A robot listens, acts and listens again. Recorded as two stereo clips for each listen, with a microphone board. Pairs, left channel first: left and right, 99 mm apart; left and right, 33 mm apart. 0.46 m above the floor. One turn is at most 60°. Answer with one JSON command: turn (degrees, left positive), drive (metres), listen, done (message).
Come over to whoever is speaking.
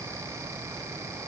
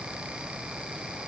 {"listen": true}
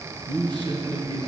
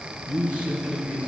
{"turn": -55}
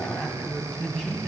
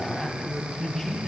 {"drive": 1.0}
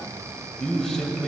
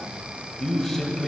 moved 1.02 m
{"drive": 1.0}
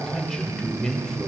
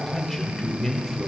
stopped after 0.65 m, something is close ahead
{"turn": 10}
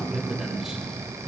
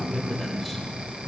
{"done": "Arrived at the man speaking, straight ahead."}